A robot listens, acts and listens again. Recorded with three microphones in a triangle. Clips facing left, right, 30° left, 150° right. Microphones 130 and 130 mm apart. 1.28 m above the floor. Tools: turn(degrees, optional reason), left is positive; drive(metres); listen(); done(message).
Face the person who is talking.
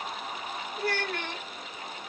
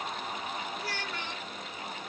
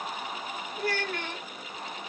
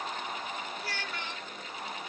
turn(degrees=65, reason="The child speaking: 65° left.")
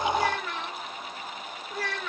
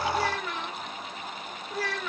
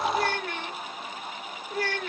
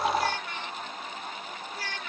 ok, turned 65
done("Found it: a child speaking, straight ahead.")